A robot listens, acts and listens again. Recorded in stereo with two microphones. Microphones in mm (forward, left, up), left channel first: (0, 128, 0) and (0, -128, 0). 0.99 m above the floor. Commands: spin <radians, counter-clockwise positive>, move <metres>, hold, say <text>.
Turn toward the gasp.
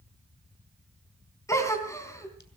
spin 0.52
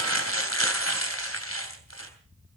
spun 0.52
hold
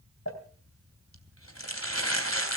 say I heard a gasp, but can't make it out now. It was about 20° right or 140° left.